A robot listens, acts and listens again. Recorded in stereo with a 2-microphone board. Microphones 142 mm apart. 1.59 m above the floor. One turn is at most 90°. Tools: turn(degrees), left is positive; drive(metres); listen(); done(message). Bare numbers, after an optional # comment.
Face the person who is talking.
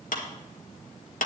listen()
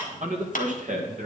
# The man speaking: about 70° right or 110° right.
turn(-70)
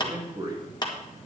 # So it is at 25° right.
turn(-25)
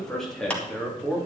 # The man speaking is now 10° left.
turn(10)
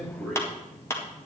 done("Found it: a man speaking, straight ahead.")